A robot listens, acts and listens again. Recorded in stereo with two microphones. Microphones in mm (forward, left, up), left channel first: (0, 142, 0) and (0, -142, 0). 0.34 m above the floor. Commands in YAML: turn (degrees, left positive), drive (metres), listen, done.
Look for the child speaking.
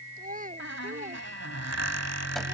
turn: -30
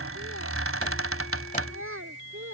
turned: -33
turn: -135
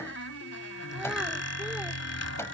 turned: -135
listen: true
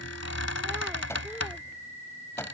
listen: true
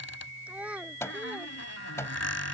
done: "Found it: a child speaking, straight ahead."